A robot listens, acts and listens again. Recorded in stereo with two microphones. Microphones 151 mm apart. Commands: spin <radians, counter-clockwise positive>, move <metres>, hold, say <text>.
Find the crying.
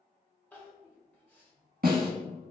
spin 0.52
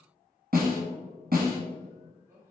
spin -0.35
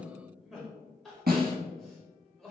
say Found it: crying, straight ahead, 1 to 2 m away.